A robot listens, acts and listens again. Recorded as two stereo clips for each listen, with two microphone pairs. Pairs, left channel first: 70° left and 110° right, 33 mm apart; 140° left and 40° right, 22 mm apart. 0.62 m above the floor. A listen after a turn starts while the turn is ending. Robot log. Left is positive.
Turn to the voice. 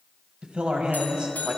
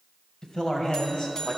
note: The man speaking: 170° right.
cmd yaw -170
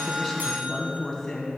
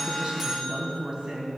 end: Found it: a man speaking, straight ahead, 2 to 4 m away.